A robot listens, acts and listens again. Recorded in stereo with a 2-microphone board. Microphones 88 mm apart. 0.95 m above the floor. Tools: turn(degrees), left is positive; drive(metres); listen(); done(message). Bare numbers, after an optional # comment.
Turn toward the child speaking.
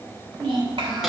# The child speaking: about 70° right or 110° right.
turn(-70)
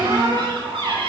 listen()
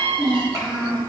# So it is at 40° right.
turn(-40)
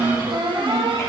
done("Facing the child speaking, over 4 m away.")